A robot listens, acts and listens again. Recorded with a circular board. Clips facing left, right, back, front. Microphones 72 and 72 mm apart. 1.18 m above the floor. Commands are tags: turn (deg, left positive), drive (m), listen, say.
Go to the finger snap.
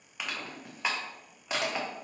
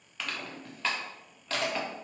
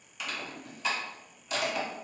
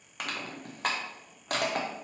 <listen/>
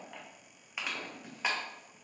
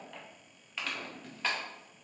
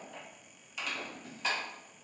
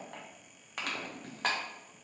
<listen/>
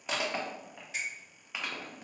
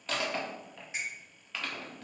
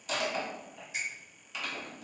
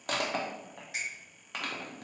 <turn deg="-20"/>
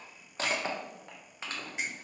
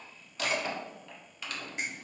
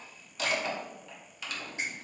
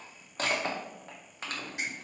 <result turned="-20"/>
<listen/>
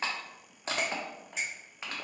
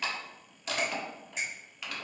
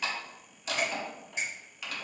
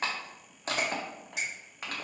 <drive m="1.0"/>
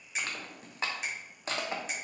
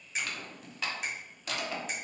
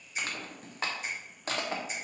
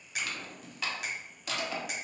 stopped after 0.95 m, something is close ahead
<say>Arrived at the finger snap, straight ahead.</say>